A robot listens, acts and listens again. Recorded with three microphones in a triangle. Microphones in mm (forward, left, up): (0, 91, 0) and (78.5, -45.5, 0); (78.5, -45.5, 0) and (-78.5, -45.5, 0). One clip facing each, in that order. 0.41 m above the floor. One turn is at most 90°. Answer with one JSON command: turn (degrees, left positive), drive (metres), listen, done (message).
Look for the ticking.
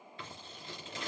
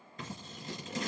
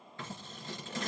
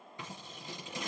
{"listen": true}
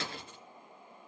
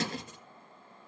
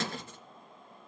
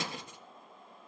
{"listen": true}
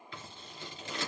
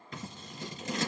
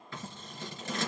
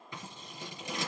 {"done": "I can't make out ticking, only scissors."}